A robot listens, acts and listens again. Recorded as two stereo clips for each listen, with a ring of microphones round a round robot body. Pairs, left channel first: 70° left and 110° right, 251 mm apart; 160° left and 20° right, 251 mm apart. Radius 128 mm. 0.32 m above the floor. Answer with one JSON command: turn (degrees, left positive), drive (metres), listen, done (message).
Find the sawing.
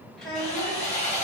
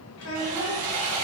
{"done": "Found it: sawing, straight ahead."}